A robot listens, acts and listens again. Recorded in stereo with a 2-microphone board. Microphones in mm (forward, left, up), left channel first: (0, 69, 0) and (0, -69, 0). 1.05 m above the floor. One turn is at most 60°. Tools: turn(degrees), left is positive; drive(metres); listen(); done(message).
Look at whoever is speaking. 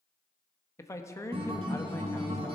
turn(degrees=20)
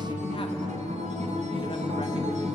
listen()
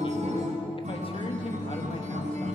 listen()
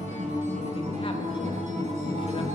done("I heard a man speaking, but can't make it out now. It was about straight ahead or 140° left.")